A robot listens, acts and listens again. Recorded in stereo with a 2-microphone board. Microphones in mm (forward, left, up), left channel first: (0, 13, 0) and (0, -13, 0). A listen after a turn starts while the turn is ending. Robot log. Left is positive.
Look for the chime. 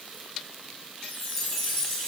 cmd yaw +30
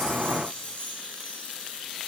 note: So it is at 135° left.
cmd yaw +135
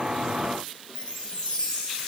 note: The chime is now 25° left.
cmd yaw +25
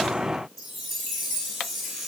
end: Found it: a chime, straight ahead, over 4 m away.